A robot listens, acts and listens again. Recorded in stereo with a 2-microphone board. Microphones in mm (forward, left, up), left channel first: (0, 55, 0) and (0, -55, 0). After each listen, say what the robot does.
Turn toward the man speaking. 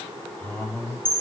Turn 30° left.
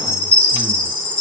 Keep listening.
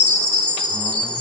Keep listening.
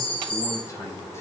I heard a man speaking, but can't make it out now. It was about 20° right or 140° left.